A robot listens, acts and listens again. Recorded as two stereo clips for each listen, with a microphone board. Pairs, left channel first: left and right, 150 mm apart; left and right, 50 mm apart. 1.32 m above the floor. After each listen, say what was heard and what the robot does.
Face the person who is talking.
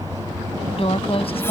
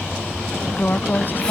The woman speaking: about 40° left or 140° left. Turn 40° left.
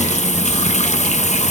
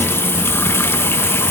Keep listening.
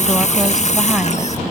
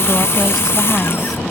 Keep listening.
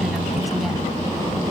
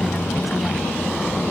I heard a woman speaking, but can't make it out now. It was about straight ahead or 100° left.